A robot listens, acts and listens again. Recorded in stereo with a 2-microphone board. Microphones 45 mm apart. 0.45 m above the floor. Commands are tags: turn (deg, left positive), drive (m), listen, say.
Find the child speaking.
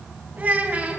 <turn deg="-30"/>
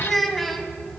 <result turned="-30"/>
<turn deg="10"/>
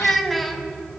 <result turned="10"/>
<say>Found it: a child speaking, straight ahead, 2 to 4 m away.</say>